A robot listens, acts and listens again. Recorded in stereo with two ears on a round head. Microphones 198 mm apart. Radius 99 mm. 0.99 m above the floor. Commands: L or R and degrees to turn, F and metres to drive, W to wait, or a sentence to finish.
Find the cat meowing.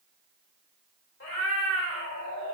L60
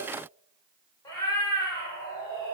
L15
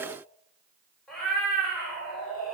Facing the cat meowing.